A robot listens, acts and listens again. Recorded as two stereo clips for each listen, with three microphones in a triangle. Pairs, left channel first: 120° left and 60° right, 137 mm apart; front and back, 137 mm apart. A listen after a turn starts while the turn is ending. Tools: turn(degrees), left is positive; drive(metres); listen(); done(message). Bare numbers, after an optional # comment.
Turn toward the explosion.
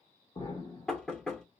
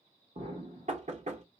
# The explosion: 160° left.
turn(160)
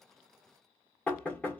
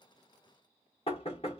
done("Facing where the explosion came from. I can't hear it now.")